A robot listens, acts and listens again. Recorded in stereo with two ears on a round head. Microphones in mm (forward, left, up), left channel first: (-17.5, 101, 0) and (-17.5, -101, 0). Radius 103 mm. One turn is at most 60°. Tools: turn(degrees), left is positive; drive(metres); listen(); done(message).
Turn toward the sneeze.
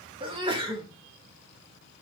turn(degrees=-25)
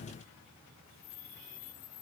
listen()
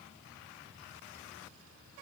done("I heard a sneeze, but can't make it out now. It was about straight ahead or 130° right.")